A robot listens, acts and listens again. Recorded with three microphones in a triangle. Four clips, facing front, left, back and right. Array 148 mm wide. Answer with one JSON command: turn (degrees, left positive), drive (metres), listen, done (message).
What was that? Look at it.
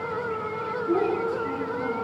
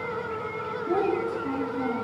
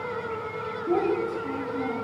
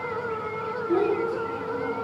{"turn": 130}
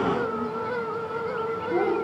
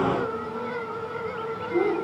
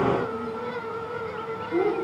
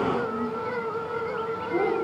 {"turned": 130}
{"turn": -25}
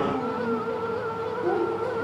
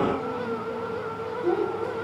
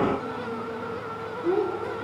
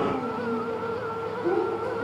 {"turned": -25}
{"done": "Facing the child speaking, over 4 m away."}